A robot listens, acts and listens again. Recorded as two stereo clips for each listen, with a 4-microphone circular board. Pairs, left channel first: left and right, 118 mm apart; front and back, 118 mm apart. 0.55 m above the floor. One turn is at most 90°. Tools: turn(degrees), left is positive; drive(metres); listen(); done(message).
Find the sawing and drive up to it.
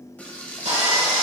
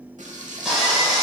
turn(degrees=-90)
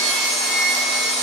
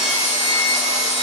drive(metres=1.0)
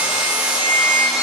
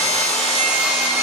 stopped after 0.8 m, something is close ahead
done("I am next to the sawing.")